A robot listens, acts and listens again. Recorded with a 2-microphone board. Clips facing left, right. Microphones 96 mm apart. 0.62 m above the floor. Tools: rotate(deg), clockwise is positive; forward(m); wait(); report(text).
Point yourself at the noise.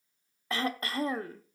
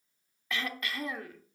rotate(-35)
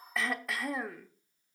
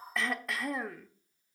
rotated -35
report("Found it: throat clearing, straight ahead, under 1 m away.")